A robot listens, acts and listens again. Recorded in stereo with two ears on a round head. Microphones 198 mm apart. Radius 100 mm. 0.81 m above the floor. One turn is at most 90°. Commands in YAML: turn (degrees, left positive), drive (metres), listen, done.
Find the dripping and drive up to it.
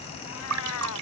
turn: -90
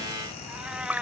turn: -10
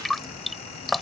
drive: 1.0
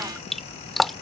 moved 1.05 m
drive: 1.0
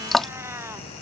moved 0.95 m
drive: 1.0
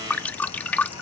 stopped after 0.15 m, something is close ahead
turn: 10
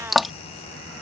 done: "I am next to the dripping."